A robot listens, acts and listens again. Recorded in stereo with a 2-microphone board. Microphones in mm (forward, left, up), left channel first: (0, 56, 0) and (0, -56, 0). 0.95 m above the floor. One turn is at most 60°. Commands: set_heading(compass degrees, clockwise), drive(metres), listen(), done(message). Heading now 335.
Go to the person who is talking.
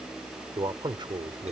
set_heading(20)
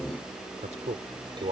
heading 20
set_heading(80)
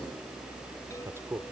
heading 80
set_heading(105)
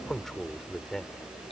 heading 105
drive(1.0)
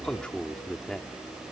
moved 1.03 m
drive(1.0)
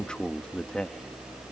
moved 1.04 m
set_heading(95)
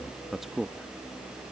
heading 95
drive(1.0)
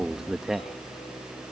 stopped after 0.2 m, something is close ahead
done("Arrived at the man speaking, straight ahead.")